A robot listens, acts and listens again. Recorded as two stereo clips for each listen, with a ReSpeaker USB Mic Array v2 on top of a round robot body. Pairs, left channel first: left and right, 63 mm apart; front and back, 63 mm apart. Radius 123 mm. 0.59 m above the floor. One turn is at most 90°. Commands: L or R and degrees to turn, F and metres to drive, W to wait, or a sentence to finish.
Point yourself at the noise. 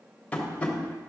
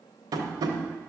L90
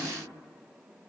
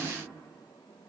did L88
L70
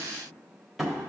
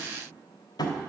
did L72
Facing the tapping, 1 to 2 m away.